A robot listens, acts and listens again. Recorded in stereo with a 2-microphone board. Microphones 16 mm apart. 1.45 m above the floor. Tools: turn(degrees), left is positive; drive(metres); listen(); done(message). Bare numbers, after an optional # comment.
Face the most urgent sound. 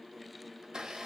listen()
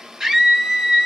# The scream: about 55° right or 125° right.
turn(-55)
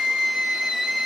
# So it is at 70° right.
turn(-70)
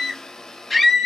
done("Found it: a scream, straight ahead, 2 to 4 m away.")